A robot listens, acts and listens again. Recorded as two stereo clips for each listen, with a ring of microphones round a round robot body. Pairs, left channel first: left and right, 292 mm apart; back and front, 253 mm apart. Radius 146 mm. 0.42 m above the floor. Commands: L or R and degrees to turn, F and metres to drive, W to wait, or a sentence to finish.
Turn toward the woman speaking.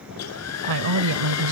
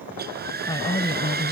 R105
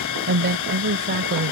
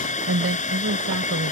R40
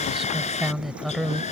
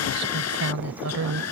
Facing the woman speaking.